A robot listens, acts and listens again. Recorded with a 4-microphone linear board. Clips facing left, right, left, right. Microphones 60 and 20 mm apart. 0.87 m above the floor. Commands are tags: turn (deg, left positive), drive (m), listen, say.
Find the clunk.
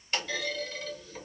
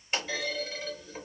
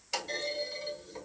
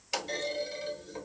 <turn deg="-15"/>
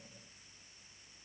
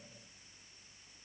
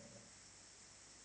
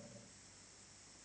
<listen/>
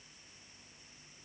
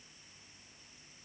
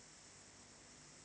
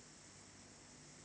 <say>I heard a clunk, but can't make it out now. It was about straight ahead or 150° right.</say>